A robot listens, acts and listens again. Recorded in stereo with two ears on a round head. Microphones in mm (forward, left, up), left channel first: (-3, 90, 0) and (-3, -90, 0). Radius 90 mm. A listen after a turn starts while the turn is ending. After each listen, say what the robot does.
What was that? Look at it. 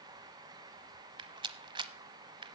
Turn 25° right.
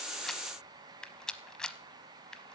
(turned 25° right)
Facing the rattle, under 1 m away.